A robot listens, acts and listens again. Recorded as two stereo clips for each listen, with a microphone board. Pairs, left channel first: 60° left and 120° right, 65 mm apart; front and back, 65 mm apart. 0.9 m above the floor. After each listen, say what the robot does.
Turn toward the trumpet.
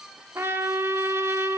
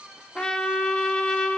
Turn 70° right.
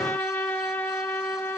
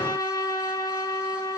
Facing the trumpet.